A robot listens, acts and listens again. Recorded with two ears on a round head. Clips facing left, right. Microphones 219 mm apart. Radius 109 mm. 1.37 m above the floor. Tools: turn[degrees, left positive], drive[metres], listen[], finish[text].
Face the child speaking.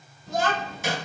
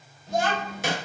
Thought: The child speaking: about 65° left or 115° left.
Action: turn[65]
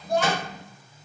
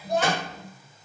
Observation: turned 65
Thought: So it is at 10° right.
Action: turn[-10]
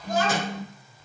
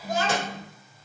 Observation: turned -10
Thought: The child speaking is now 30° right.
Action: turn[-30]
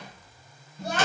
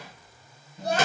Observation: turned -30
Thought: The child speaking is now 35° right.
Action: turn[-35]
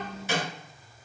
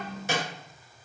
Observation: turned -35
Action: finish[Facing the child speaking.]